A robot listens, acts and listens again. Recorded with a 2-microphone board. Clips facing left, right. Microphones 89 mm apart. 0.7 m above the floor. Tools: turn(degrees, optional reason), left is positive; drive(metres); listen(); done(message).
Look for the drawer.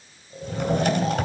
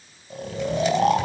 turn(degrees=60, reason="The drawer: about 60° left or 120° left.")
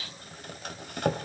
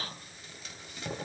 turn(degrees=60, reason="So it is at 60° left.")
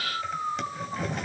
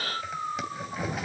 done("Facing the drawer, 2 to 4 m away.")